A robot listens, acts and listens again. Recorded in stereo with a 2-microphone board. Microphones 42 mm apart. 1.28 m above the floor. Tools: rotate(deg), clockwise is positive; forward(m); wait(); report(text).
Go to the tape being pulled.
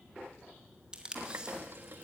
rotate(20)
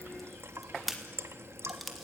forward(1.0)
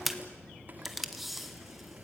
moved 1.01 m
forward(1.0)
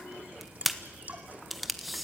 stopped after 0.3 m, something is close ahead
report("I am next to the tape being pulled.")